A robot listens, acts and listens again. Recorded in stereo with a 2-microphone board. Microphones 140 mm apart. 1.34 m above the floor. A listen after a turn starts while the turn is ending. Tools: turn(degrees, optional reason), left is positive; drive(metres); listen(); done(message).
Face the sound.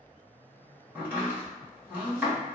turn(degrees=-30)
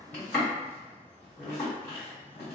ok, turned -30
turn(degrees=15, reason="So it is at 15° left.")
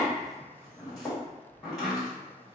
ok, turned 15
done("Found it: chopping, straight ahead.")